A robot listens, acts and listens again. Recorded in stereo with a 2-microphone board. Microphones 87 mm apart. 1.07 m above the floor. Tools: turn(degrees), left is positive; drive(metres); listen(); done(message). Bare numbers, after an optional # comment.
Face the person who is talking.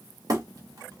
listen()
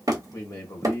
# The man speaking: about 40° left or 140° left.
turn(40)
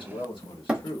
# So it is at 100° left.
turn(100)
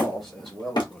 done("Facing the man speaking, 1 to 2 m away.")